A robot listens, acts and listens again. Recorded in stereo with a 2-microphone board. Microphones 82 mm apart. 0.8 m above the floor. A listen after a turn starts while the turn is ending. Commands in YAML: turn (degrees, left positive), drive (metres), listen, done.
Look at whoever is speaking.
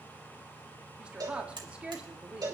turn: -30
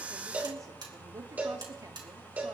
listen: true
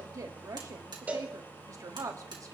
turn: -135
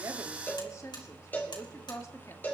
turn: 40
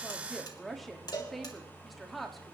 done: "Facing the woman speaking, 1 to 2 m away."